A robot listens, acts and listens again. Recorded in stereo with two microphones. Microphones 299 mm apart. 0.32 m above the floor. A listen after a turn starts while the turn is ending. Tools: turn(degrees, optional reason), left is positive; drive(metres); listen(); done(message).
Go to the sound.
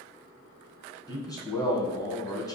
turn(degrees=30)
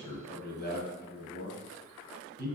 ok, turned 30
turn(degrees=135, reason="So it is at 135° left.")
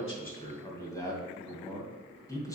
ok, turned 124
turn(degrees=15, reason="The man speaking is now 15° left.")
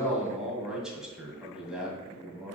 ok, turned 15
drive(metres=1.0)
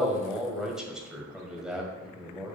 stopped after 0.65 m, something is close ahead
done("I am next to the man speaking.")